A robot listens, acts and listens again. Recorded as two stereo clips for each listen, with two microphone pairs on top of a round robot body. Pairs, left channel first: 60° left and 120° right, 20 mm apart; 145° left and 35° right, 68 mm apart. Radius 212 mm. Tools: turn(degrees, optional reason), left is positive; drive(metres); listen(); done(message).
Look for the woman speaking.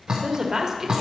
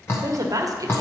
turn(degrees=-55, reason="The woman speaking: 55° right.")
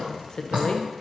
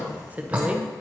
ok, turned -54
turn(degrees=40, reason="The woman speaking is now 40° left.")
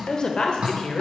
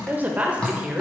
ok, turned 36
turn(degrees=40, reason="The woman speaking is now 40° left.")
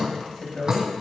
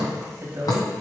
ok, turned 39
turn(degrees=15, reason="The woman speaking is now 15° left.")
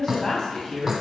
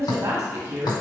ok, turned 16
turn(degrees=10, reason="The woman speaking is now 10° left.")
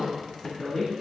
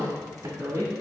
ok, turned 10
done("Found it: a woman speaking, straight ahead.")